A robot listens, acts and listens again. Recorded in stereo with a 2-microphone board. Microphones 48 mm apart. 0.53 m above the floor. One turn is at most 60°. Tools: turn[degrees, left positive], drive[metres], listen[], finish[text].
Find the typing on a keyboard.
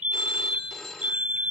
Action: listen[]
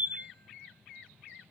Action: listen[]
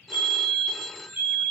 Action: finish[I can't make out typing on a keyboard to turn to.]